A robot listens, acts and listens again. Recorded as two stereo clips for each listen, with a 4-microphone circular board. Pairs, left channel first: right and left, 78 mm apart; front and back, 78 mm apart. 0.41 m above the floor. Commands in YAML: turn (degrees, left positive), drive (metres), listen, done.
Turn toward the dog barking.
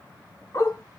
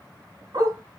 turn: -135
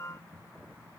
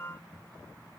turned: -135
listen: true
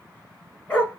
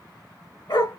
turn: -20
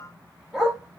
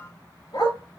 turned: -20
done: "Facing the dog barking, 2 to 4 m away."